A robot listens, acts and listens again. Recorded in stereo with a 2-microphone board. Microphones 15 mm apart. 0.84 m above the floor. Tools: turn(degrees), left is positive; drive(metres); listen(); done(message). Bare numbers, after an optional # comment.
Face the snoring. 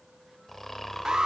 # The snoring: about 30° left or 150° left.
turn(30)
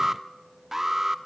listen()
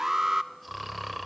done("Facing the snoring, 2 to 4 m away.")